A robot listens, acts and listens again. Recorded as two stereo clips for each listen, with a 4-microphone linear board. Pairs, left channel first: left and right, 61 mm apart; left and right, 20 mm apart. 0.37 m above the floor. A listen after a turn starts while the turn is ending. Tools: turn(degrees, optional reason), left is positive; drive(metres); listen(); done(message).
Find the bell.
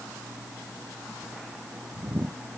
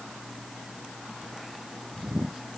listen()
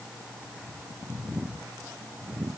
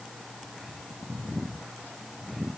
listen()
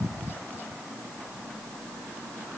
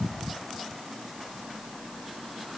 done("I can't make out a bell to turn to.")